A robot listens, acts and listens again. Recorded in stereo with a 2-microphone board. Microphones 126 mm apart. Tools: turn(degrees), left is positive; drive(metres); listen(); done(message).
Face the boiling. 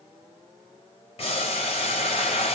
turn(degrees=55)
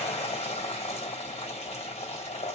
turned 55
turn(degrees=65)
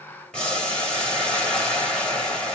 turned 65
done("Facing the boiling, 1 to 2 m away.")